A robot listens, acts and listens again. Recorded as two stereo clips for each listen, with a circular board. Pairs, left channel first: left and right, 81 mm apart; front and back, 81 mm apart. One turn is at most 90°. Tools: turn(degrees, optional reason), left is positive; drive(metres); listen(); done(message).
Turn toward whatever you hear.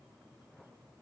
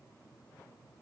listen()
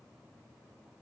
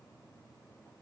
listen()
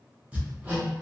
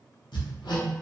turn(degrees=-15, reason="The hammering: 15° right.")
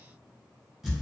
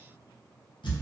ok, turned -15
done("Facing the hammering, under 1 m away.")